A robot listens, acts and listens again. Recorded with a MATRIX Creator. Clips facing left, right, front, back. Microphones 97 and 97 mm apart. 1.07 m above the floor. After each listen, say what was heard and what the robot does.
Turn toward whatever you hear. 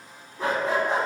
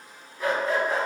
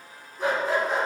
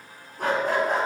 The dog barking: 155° left. Turn 155° left.
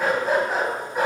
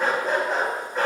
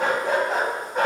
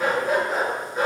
The dog barking is now 15° left. Turn 15° left.
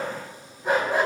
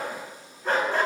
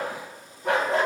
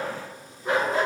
The dog barking is now 20° left. Turn 20° left.
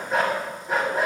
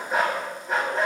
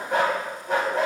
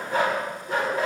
The dog barking is now 10° left. Turn 10° left.
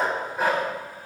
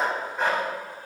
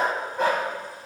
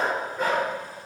The dog barking is now 10° left. Turn 10° left.
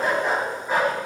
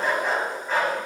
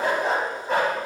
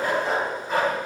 The dog barking is now 15° left. Turn 15° left.
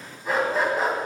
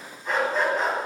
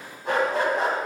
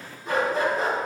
Found it: a dog barking, straight ahead, 2 to 4 m away.